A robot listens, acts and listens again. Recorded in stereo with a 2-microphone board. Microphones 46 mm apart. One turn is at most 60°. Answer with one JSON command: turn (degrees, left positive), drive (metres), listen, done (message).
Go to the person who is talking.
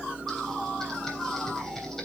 {"listen": true}
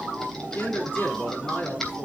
{"turn": 45}
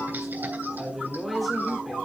{"drive": 1.0}
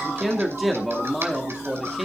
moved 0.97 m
{"drive": 1.0}
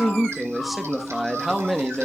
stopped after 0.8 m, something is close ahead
{"done": "Arrived at the man speaking, straight ahead."}